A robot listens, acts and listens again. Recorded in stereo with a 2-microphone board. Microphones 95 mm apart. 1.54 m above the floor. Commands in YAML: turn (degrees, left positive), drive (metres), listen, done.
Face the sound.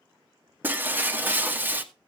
turn: -20
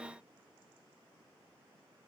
listen: true
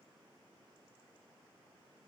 done: "I heard breaking glass, but can't make it out now. It was about straight ahead or 140° right."